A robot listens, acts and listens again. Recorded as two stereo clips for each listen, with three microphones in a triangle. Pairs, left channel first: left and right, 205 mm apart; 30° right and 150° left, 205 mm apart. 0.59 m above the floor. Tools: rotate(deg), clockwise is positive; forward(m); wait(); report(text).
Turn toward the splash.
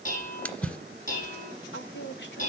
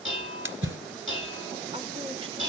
rotate(-175)
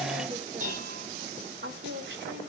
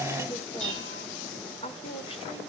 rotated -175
report("Facing where the splash came from. I can't hear it now.")